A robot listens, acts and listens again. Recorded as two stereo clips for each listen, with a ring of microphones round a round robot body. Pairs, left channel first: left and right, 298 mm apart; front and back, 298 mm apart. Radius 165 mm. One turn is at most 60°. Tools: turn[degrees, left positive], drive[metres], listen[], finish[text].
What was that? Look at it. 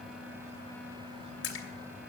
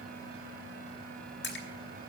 Thought: The splash: 50° left.
Action: turn[50]
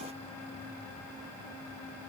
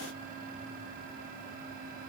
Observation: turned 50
Action: finish[Facing where the splash came from. I can't hear it now.]